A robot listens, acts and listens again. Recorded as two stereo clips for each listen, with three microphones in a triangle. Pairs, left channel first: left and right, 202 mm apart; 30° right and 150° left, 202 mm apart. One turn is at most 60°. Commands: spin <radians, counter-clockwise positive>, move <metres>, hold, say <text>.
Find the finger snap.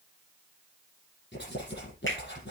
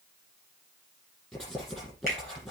spin 1.05
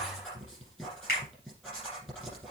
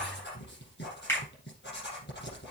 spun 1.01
spin 0.87
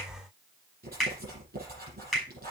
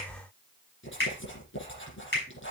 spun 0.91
say Found it: a finger snap, straight ahead.